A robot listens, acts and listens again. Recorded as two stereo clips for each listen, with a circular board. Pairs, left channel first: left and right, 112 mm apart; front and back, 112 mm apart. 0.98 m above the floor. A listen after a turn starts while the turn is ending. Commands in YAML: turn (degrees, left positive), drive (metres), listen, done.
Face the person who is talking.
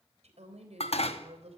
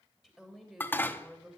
turn: -95
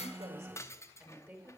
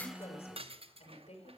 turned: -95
turn: -20
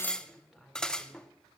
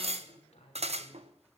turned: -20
done: "Found it: a woman speaking, straight ahead."